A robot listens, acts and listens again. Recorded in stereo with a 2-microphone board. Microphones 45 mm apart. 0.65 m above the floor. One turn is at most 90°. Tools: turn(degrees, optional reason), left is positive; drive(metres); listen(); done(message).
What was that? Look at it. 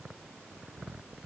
listen()
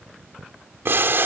turn(degrees=-55, reason="The boiling: about 55° right or 125° right.")
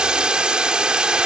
turn(degrees=-25, reason="So it is at 25° right.")
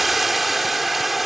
done("Facing the boiling.")